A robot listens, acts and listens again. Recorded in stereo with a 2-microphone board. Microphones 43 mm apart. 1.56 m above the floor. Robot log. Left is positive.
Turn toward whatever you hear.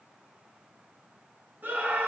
note: The scream: about 50° right or 130° right.
cmd yaw -50
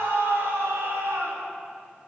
note: So it is at 80° right.
cmd yaw -80
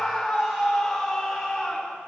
end: Found it: a scream, straight ahead.